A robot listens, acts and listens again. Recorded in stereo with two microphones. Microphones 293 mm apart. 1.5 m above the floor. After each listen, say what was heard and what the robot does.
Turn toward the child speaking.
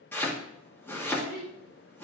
The child speaking: about 60° right or 120° right. Turn 60° right.
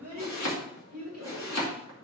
So it is at 60° right. Turn 60° right.
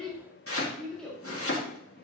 Found it: a child speaking, straight ahead.